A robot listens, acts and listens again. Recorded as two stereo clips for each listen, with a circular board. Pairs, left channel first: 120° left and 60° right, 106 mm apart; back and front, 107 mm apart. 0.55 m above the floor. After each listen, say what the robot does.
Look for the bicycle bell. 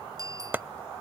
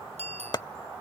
Found it: a bicycle bell, straight ahead.